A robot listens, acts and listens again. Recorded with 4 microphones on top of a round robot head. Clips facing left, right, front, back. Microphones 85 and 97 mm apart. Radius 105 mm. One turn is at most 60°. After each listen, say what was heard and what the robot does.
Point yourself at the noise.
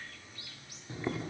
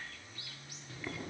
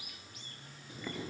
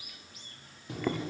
The boiling: 160° left. Turn 60° left.
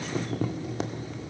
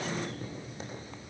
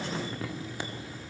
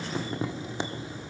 The boiling is now 110° left. Turn 60° left.
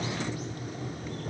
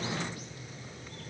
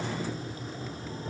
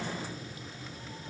The boiling is now 55° left. Turn 55° left.
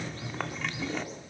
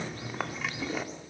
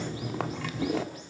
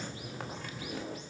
Found it: boiling, straight ahead, 1 to 2 m away.